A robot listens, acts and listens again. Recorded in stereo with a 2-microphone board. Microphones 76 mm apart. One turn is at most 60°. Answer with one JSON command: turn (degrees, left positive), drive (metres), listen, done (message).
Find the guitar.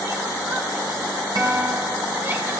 {"turn": -60}
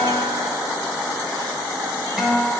{"done": "Found it: a guitar, straight ahead, over 4 m away."}